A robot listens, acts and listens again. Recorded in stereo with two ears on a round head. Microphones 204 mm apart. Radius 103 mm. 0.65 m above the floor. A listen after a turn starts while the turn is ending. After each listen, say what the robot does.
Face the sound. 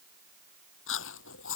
Turn 55° left.
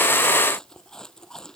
Facing the chewing.